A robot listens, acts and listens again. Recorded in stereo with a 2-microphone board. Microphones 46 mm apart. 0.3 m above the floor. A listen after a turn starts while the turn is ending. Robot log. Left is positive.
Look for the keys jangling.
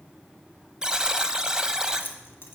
note: The keys jangling: about 55° left or 125° left.
cmd yaw +55
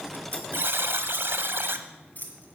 note: So it is at 40° left.
cmd yaw +40
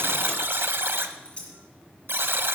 note: The keys jangling is now 25° left.
cmd yaw +25
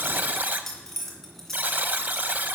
end: Found it: keys jangling, straight ahead, 2 to 4 m away.